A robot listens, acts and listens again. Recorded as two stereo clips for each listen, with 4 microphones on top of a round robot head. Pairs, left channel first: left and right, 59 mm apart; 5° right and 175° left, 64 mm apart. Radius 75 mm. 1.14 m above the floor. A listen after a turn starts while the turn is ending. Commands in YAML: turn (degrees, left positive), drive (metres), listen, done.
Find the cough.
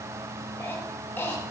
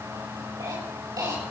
turn: 150
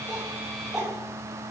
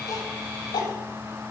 done: "Facing the cough, over 4 m away."